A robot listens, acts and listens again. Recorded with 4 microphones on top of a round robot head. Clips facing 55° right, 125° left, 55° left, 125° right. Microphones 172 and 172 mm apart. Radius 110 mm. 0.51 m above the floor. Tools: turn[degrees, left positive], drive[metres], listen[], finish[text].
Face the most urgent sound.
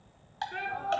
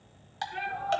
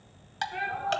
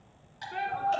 Thought: The shout: 80° right.
Action: turn[-80]
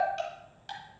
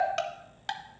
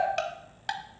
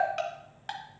Action: listen[]
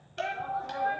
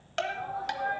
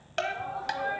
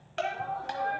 Thought: The shout is now 30° right.
Action: turn[-30]
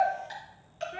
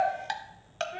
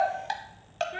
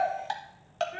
Action: finish[Facing the shout, 1 to 2 m away.]